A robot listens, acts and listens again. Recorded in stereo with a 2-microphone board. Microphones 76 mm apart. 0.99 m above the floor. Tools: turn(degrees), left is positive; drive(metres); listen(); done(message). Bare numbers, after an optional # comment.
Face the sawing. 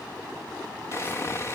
# The sawing: about 35° left or 145° left.
turn(35)
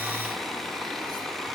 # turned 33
done("Found it: sawing, straight ahead.")